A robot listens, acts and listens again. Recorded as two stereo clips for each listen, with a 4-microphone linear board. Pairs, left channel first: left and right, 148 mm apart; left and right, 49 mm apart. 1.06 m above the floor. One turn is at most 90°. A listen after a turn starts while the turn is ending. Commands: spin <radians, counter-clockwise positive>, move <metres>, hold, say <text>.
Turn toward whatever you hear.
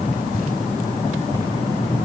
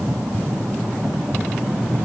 hold
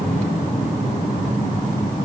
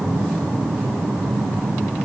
hold
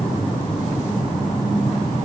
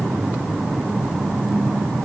say I can't make out anything.